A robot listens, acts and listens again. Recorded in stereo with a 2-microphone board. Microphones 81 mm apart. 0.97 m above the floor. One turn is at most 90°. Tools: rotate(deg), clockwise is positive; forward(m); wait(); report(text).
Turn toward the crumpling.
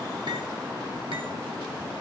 wait()
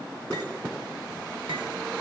wait()
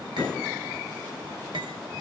report("I can't make out crumpling.")